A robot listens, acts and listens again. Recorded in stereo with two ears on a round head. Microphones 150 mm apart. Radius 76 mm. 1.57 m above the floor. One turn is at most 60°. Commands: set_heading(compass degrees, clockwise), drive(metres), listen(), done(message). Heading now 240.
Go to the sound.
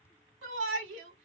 set_heading(300)
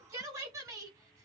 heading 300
set_heading(320)
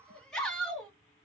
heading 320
drive(1.0)
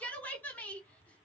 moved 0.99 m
set_heading(310)
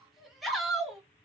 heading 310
drive(1.0)
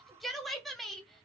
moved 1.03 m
drive(1.0)
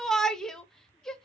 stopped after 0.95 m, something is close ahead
done("Arrived at the shout, straight ahead.")